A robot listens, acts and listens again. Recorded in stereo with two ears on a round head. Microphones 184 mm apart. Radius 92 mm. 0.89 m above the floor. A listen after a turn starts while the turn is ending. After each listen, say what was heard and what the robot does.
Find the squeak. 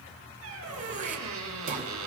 Turn 90° right.
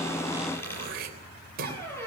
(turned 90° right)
So it is at 10° left. Turn 10° left.
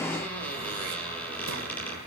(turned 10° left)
The squeak is now 10° left. Turn 10° left.
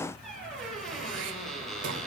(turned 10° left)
Facing the squeak, over 4 m away.